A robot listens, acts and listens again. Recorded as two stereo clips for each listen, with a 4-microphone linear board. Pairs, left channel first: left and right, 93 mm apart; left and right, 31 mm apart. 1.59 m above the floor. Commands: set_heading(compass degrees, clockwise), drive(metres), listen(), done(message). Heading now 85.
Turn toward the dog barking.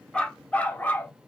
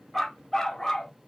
set_heading(65)
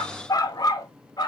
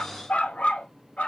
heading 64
set_heading(289)
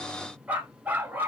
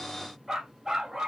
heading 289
set_heading(309)
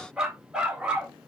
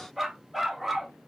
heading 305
set_heading(315)
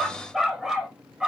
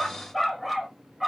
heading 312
done("Facing the dog barking.")